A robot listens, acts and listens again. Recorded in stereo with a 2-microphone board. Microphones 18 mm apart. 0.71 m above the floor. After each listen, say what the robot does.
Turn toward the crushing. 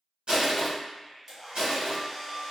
Turn 70° right.
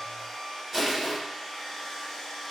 Turn 25° right.
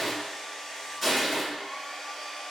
Found it: crushing, straight ahead.